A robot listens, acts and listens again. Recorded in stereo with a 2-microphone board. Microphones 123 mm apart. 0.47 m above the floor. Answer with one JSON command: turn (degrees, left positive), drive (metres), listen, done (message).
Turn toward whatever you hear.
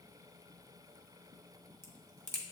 {"turn": 20}
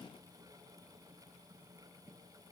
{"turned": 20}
{"listen": true}
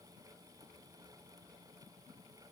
{"done": "I heard a crack, but can't make it out now. It was about straight ahead or 140° left."}